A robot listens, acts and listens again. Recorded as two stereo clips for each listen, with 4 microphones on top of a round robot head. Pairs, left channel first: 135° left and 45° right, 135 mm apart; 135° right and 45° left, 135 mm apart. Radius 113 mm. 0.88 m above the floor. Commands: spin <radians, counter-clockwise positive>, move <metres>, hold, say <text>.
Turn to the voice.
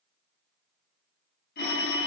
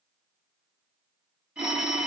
hold
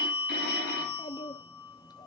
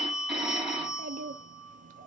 spin 1.22
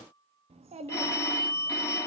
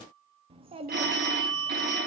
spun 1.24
say Facing the child speaking.